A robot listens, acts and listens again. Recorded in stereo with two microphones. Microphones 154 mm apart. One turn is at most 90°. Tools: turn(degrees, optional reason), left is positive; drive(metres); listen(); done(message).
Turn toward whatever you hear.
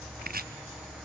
turn(degrees=-90)
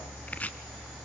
turn(degrees=10, reason="So it is at 10° left.")
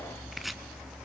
done("Found it: chopping, straight ahead.")